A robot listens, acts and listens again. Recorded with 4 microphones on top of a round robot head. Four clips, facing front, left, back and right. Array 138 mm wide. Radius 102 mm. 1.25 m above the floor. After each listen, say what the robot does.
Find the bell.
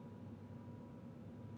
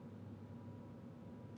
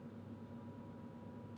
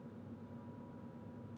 Keep listening.
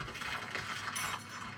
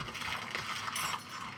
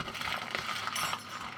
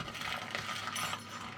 Turn 130° left.
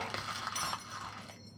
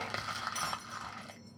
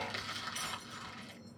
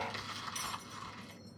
Turn 10° right.
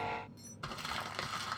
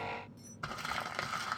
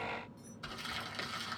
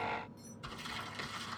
Facing the bell.